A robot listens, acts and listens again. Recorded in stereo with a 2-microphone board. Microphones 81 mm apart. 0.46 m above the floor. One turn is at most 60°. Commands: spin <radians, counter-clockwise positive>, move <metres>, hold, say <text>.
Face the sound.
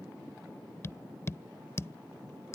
spin 0.61
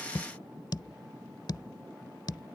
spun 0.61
spin 1.05
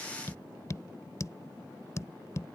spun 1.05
spin 0.79
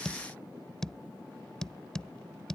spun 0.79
spin 0.17
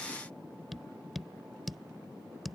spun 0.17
say Facing the tapping.